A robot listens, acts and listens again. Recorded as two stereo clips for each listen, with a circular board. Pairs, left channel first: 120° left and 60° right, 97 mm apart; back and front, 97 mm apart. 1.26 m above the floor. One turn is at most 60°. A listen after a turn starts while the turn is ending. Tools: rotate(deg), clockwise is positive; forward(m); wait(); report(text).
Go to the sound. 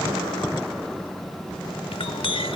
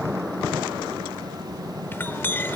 rotate(-60)
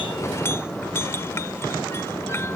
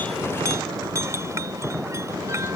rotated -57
rotate(-55)
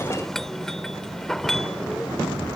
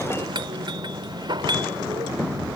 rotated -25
rotate(-35)
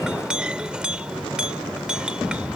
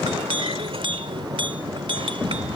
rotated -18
rotate(-20)
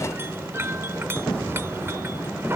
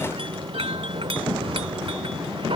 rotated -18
forward(1.0)
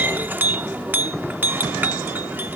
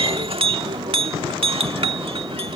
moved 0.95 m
forward(1.0)
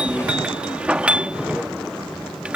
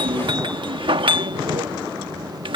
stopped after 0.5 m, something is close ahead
rotate(-15)
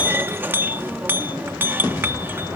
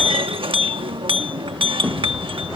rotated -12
report("Arrived at the clink, straight ahead.")